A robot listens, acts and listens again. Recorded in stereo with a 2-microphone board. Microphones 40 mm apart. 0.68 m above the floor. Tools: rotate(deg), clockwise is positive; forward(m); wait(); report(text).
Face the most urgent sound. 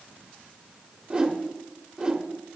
wait()
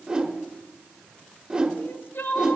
rotate(-65)
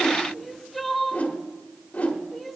report("Found it: crying, straight ahead.")